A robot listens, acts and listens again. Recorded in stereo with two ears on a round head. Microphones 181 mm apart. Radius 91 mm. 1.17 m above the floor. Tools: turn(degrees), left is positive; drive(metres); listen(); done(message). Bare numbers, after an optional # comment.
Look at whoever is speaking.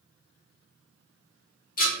listen()
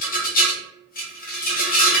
listen()
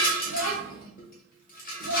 turn(90)
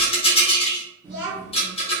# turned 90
# So it is at 10° right.
turn(-10)
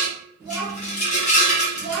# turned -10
done("Facing the child speaking, 1 to 2 m away.")